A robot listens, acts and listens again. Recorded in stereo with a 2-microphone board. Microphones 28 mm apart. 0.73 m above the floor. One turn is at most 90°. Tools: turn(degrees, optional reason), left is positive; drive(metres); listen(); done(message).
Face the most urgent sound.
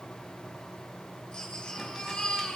turn(degrees=30, reason="The baby crying: about 30° left or 150° left.")
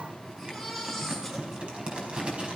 done("Found it: a baby crying, straight ahead.")